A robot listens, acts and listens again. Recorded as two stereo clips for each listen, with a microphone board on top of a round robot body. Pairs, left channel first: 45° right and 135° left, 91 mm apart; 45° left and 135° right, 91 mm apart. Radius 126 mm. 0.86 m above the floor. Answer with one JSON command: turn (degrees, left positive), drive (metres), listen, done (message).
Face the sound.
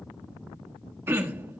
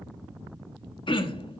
{"turn": 70}
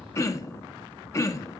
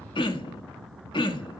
{"turn": 15}
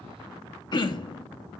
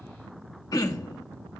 {"done": "Found it: throat clearing, straight ahead, 1 to 2 m away."}